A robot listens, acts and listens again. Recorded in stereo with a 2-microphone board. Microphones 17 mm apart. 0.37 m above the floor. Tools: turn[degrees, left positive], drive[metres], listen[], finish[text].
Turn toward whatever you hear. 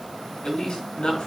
Thought: The man speaking: about 65° left or 115° left.
Action: turn[65]
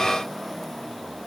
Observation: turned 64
Action: listen[]
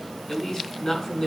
Thought: So it is at 45° left.
Action: turn[45]
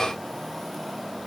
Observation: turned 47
Action: listen[]
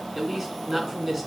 Action: finish[Facing the man speaking.]